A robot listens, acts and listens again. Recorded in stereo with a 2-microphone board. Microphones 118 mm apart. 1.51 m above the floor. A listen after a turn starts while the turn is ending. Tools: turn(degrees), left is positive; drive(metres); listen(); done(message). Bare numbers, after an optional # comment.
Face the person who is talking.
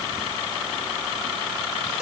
listen()
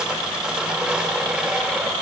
listen()
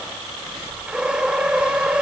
done("I can't make out anyone speaking, only sawing.")